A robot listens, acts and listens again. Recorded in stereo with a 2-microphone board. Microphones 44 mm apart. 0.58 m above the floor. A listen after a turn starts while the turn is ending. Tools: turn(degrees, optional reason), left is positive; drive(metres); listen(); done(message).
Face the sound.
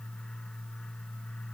listen()
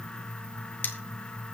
turn(degrees=50, reason="The cutlery clinking: about 50° left or 130° left.")
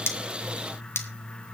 turn(degrees=80, reason="So it is at 80° left.")
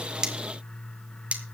turn(degrees=-35, reason="The cutlery clinking is now 35° right.")
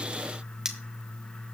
turn(degrees=-15, reason="The cutlery clinking is now 15° right.")
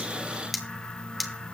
done("Found it: cutlery clinking, straight ahead, 1 to 2 m away.")